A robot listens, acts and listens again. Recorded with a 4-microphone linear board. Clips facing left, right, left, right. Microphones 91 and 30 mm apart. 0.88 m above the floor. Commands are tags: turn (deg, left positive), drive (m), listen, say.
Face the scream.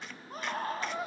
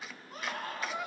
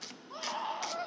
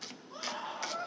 <turn deg="35"/>
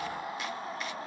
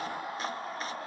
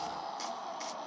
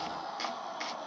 <say>Found it: a scream, straight ahead, over 4 m away.</say>